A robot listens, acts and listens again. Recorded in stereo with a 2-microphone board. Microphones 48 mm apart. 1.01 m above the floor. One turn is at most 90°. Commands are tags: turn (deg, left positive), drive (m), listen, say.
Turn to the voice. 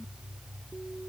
<listen/>
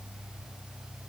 <listen/>
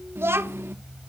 <turn deg="-55"/>
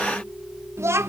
<turn deg="-70"/>
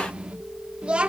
<turn deg="-25"/>
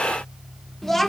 <say>Facing the child speaking, 1 to 2 m away.</say>